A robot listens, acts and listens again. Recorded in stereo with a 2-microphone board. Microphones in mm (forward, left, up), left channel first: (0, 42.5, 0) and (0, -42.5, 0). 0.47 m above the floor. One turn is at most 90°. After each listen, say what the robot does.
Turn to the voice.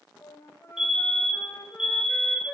Keep listening.
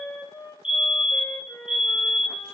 Keep listening.
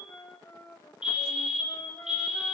I can't make out anyone speaking to turn to.